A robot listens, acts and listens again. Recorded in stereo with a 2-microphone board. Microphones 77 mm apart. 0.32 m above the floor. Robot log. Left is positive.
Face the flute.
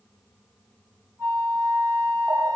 note: The flute: about 35° right or 145° right.
cmd yaw -35
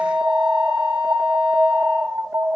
note: So it is at 110° right.
cmd yaw -110
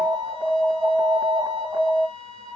note: The flute is now 45° right.
cmd yaw -45
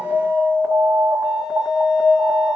cmd idle
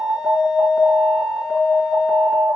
cmd idle
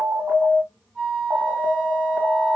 note: The flute is now 10° right.
cmd yaw -10
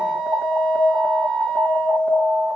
end: Found it: a flute, straight ahead, 1 to 2 m away.